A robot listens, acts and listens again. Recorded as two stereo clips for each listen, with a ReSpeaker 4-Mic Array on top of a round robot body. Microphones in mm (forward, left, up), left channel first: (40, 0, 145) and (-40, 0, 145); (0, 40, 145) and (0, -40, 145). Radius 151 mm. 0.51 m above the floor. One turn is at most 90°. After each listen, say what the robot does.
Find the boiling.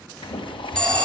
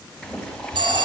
Turn 10° left.
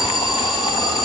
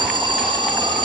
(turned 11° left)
Keep listening.
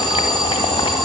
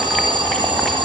Keep listening.
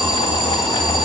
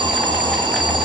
Facing the boiling.